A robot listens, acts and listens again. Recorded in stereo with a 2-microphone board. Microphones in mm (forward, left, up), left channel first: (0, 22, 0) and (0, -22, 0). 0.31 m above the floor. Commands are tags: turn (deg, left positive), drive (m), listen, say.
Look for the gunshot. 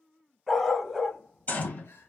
<turn deg="45"/>
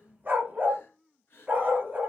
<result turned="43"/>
<listen/>
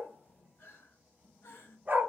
<say>I heard a gunshot, but can't make it out now. It was about straight ahead or 95° left.</say>